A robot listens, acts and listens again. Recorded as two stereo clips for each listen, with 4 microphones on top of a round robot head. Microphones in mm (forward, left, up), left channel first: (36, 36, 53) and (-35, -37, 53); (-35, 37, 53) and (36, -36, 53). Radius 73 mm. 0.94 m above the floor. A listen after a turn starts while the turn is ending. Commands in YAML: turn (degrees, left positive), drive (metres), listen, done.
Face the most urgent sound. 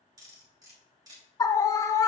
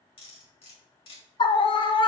turn: 100
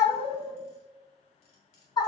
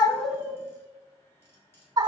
done: "Found it: a scream, straight ahead, 1 to 2 m away."